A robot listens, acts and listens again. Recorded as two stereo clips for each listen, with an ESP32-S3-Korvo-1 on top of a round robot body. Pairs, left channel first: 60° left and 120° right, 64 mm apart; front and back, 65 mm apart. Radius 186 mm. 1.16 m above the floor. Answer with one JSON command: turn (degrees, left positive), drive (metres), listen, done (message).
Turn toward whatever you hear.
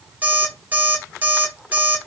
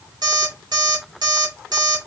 {"turn": 175}
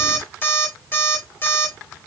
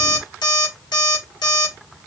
{"done": "Found it: an alarm clock, straight ahead, 2 to 4 m away."}